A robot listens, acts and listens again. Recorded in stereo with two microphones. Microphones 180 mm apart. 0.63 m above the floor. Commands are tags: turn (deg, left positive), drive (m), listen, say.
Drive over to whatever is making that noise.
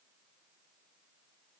<listen/>
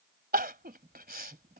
<turn deg="-55"/>
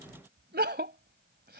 <turn deg="-65"/>
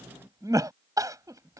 <turn deg="-20"/>
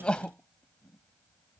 <drive m="1.0"/>
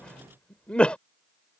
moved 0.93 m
<drive m="1.0"/>
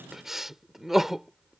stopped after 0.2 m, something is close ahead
<say>I am next to the crying.</say>